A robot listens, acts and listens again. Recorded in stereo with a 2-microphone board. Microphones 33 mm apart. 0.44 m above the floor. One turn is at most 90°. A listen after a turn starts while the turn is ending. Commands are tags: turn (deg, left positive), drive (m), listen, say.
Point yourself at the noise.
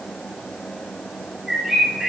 <turn deg="-15"/>
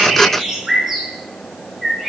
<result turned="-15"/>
<say>Facing the bird.</say>